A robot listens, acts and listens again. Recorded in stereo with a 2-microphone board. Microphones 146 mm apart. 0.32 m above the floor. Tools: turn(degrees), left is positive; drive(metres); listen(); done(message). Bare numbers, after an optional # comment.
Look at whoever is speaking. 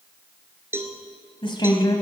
# The woman speaking: about 30° left or 150° left.
turn(30)
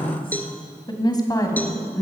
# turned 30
# The woman speaking: about 20° left or 160° left.
turn(20)
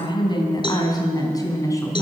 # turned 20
# The woman speaking: about 20° left or 160° left.
turn(20)
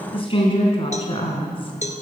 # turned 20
# The woman speaking: about 40° left or 140° left.
turn(40)
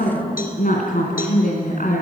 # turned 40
# So it is at 110° left.
turn(110)
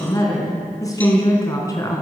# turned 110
# The woman speaking is now 25° left.
turn(25)
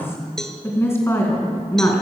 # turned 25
# The woman speaking is now 15° left.
turn(15)
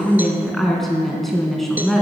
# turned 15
done("Facing the woman speaking, 2 to 4 m away.")